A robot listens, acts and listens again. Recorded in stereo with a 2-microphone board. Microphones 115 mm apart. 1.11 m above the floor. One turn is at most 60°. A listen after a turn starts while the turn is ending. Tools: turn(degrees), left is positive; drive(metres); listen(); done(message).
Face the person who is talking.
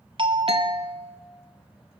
listen()
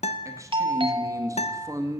turn(degrees=-30)
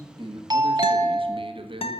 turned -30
turn(degrees=-60)
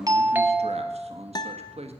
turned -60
turn(degrees=-60)
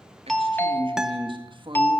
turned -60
turn(degrees=-50)
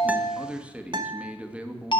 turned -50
turn(degrees=-10)
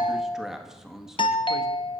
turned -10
done("Facing the man speaking.")